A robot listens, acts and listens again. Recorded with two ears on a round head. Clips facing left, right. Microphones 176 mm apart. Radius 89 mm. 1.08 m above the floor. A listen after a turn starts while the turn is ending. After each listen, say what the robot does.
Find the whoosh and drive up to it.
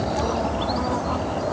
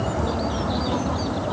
Keep listening.
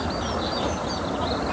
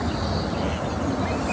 Keep listening.
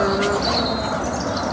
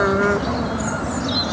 I can't make out a whoosh to turn to.